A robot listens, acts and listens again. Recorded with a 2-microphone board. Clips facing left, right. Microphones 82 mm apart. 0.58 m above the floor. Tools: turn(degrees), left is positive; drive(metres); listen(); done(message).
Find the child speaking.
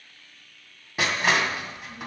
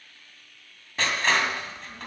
turn(degrees=-40)
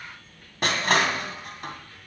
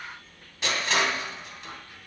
turn(degrees=-15)
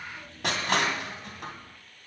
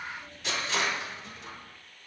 turn(degrees=-10)
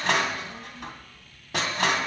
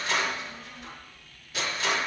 turn(degrees=-10)
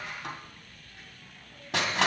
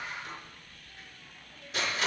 done("Facing the child speaking.")